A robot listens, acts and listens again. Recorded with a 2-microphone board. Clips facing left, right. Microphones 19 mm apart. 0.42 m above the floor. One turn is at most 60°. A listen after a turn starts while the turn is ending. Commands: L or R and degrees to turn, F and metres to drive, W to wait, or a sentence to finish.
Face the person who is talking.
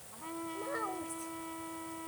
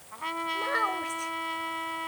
R55
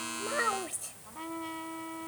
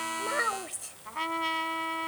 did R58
Found it: a child speaking, straight ahead.